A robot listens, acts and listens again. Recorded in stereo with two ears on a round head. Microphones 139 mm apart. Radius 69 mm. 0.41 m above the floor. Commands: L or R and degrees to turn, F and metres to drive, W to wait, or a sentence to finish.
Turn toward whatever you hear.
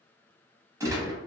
R20
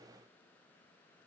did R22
W
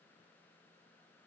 I heard a gunshot, but can't make it out now. It was about straight ahead or 135° right.